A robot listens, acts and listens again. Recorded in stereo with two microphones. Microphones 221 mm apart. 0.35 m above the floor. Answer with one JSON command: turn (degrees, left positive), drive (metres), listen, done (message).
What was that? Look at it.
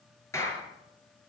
{"turn": 30}
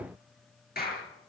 {"turn": 135}
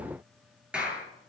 {"done": "Found it: a clap, straight ahead, over 4 m away."}